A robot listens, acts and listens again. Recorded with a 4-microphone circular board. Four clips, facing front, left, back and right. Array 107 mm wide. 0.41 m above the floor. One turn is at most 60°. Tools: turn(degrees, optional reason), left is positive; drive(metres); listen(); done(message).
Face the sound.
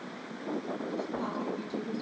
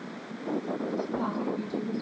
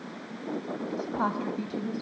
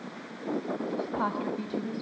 turn(degrees=-60, reason="The woman speaking: 140° right.")
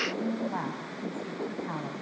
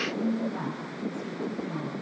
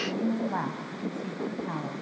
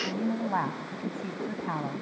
turn(degrees=-60, reason="The woman speaking is now 90° right.")
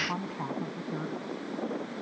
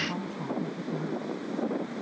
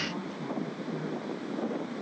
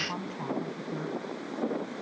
turn(degrees=-15, reason="The woman speaking is now 15° right.")
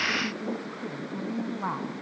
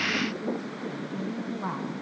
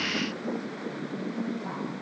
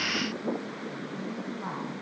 turn(degrees=10, reason="The woman speaking is now 10° left.")
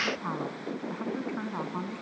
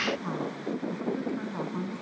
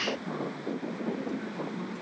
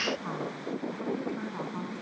done("Facing the woman speaking, 2 to 4 m away.")